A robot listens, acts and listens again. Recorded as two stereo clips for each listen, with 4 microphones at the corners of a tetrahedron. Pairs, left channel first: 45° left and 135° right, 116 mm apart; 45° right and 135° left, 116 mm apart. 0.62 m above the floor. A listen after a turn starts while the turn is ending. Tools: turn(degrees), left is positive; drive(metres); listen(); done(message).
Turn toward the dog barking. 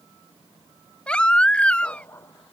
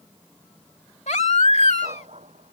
turn(degrees=115)
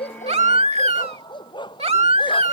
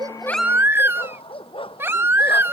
done("Found it: a dog barking, straight ahead.")